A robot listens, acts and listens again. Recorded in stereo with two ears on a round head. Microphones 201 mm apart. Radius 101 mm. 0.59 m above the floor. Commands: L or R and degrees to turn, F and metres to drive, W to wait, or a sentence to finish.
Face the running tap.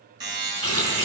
L30
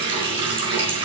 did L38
R25
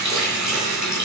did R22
Found it: a running tap, straight ahead.